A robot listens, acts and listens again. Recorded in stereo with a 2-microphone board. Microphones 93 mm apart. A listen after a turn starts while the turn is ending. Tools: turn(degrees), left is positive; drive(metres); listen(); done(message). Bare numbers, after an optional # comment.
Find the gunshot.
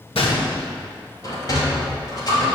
turn(90)
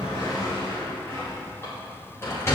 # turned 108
# Nothing new. It was at 20° right.
turn(-20)
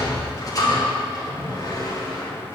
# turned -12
done("Facing where the gunshot came from. I can't hear it now.")